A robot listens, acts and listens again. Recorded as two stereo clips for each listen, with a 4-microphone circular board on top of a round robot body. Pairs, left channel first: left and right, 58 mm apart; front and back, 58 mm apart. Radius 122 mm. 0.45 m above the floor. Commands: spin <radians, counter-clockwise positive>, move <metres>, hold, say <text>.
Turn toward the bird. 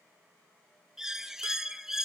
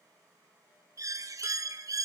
spin -2.97
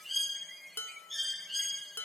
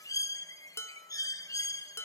say Facing the bird, 1 to 2 m away.